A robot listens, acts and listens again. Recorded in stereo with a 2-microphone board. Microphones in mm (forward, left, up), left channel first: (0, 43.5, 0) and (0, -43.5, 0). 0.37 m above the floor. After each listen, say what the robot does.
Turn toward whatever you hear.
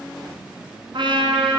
Turn 70° right.
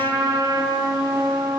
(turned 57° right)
Turn 50° right.
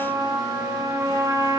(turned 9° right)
Turn 40° right.
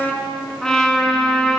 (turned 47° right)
Facing the trumpet.